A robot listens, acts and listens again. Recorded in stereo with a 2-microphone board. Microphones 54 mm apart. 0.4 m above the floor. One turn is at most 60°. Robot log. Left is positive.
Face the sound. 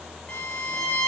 note: The violin: about 30° left or 150° left.
cmd yaw +30
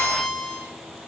end: Facing the violin.